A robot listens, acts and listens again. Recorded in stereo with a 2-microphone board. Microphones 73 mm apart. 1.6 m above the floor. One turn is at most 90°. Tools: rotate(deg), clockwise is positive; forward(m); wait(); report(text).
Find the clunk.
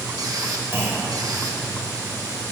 rotate(35)
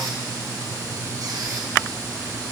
wait()
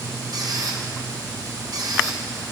report("I heard a clunk, but can't make it out now. It was about straight ahead or 110° right.")